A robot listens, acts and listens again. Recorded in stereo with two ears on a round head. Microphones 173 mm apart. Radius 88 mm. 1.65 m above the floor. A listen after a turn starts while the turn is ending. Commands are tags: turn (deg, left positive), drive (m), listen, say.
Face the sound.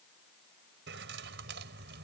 <turn deg="-65"/>
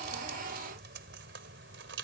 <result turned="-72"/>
<turn deg="-60"/>
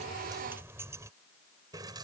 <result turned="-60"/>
<turn deg="-20"/>
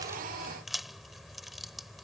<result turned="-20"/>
<say>Facing the keys jangling.</say>